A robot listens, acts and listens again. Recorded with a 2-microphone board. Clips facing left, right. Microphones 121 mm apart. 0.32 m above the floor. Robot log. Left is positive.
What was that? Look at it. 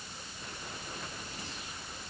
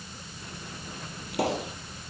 cmd yaw -90
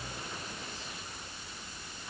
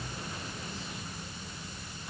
end: Facing where the pop came from. I can't hear it now.